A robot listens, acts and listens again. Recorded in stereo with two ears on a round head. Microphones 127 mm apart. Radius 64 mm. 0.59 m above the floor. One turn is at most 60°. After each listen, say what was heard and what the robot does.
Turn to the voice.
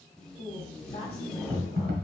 The woman speaking: about 40° left or 140° left. Turn 40° left.
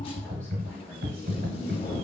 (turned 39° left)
Keep listening.
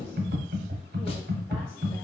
Keep listening.
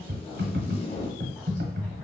I heard a woman speaking, but can't make it out now. It was about straight ahead or 100° left.